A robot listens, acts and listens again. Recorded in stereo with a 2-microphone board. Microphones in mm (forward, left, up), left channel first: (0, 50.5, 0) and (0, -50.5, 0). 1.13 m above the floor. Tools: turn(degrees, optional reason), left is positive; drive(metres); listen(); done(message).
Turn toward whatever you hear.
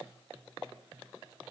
listen()
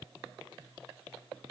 listen()
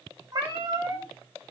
turn(degrees=-35, reason="The cat meowing: about 35° right or 145° right.")
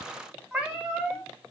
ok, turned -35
done("Facing the cat meowing.")